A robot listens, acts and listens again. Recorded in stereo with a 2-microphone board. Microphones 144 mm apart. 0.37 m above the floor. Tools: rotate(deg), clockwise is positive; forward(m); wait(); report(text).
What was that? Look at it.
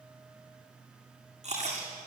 rotate(50)
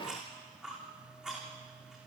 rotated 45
report("Found it: chewing, straight ahead, over 4 m away.")